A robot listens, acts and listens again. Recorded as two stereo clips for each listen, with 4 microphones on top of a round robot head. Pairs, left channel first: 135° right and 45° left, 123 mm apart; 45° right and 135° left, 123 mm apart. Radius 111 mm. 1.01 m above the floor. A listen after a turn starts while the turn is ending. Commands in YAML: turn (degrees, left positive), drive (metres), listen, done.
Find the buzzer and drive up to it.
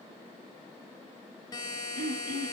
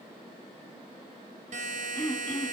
turn: 165
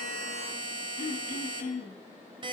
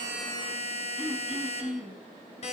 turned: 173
drive: 1.0
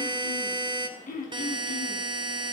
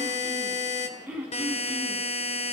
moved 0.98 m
turn: -10
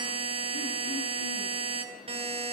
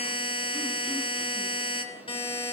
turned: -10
drive: 1.0
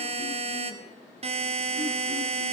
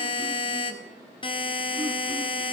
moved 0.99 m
drive: 1.0
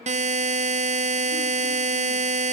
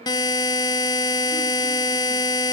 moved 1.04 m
turn: 15
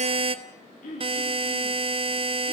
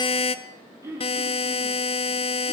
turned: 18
drive: 1.0
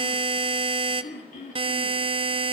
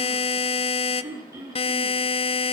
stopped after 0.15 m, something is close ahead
done: "Arrived at the buzzer, straight ahead."